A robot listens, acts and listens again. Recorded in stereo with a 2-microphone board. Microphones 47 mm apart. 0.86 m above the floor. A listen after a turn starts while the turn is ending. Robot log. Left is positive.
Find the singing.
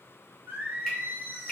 note: The singing: about 40° right or 140° right.
cmd yaw -40
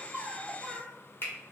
note: So it is at 10° right.
cmd yaw -10
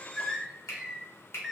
end: Facing the singing.